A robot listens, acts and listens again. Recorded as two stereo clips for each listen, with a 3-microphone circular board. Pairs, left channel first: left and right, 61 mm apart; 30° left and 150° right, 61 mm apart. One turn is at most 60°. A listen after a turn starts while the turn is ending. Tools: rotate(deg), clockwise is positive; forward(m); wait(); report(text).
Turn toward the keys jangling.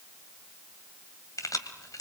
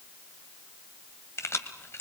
rotate(-60)
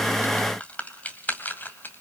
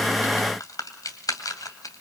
rotate(-35)
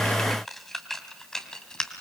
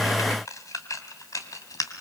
rotate(-15)
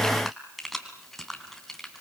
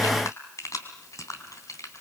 report("Found it: keys jangling, straight ahead, 2 to 4 m away.")